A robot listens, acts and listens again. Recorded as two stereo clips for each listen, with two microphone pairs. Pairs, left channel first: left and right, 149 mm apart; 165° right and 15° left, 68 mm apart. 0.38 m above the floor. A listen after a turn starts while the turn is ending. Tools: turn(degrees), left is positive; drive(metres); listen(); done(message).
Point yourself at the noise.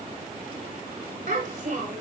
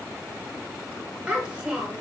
turn(degrees=-60)
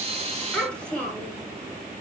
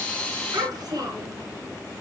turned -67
done("Found it: a child speaking, straight ahead, 1 to 2 m away.")